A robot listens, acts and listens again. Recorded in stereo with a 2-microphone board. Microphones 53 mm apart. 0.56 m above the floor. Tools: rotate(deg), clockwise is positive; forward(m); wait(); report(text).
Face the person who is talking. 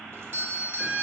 wait()
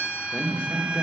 rotate(-25)
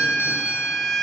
wait()
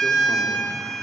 wait()
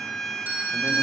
report("I heard a man speaking, but can't make it out now. It was about straight ahead or 130° left.")